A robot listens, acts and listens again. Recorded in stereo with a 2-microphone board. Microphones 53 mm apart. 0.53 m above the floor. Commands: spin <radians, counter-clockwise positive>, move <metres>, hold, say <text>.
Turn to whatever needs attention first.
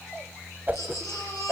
spin 1.13
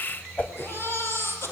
spin 0.87
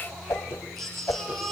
say Found it: a baby crying, straight ahead, over 4 m away.